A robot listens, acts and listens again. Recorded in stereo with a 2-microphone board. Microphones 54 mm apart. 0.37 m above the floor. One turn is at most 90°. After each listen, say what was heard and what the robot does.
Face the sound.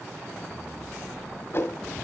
The whoosh: about 45° left or 135° left. Turn 45° left.
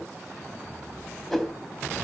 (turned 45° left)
Found it: a whoosh, straight ahead, 1 to 2 m away.